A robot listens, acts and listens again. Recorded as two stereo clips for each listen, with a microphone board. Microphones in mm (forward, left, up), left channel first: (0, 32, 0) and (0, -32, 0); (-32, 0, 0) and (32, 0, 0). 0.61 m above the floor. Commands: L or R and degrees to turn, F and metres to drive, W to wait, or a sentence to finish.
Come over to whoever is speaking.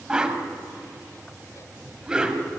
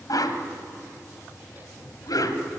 W
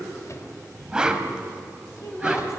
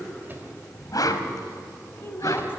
L125
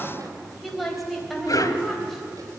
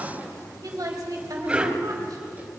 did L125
F1.0
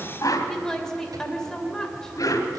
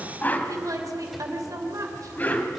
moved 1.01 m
L10
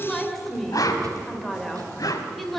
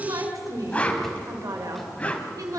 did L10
F1.0
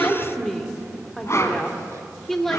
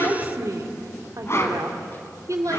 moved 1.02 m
F1.0
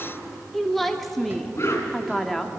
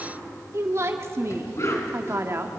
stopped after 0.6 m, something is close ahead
I am next to the woman speaking.